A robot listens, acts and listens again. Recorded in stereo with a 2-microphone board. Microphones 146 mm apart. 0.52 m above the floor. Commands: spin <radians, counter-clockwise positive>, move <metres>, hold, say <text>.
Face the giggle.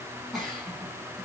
spin 0.52
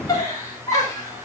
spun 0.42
spin 2.71
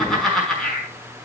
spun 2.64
say Facing the giggle, over 4 m away.